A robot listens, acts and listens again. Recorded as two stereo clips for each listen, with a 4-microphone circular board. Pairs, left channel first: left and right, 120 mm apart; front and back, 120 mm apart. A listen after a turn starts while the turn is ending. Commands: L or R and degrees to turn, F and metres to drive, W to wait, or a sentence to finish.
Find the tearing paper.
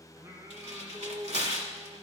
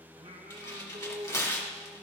R70
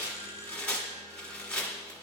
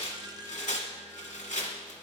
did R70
Facing the tearing paper.